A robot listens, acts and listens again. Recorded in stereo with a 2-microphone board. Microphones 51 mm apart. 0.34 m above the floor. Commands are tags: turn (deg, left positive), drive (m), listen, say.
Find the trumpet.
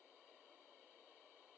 <listen/>
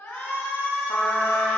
<turn deg="35"/>
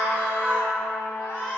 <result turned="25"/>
<turn deg="120"/>
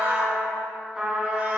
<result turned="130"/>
<turn deg="-10"/>
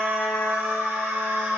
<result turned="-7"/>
<say>Facing the trumpet, 1 to 2 m away.</say>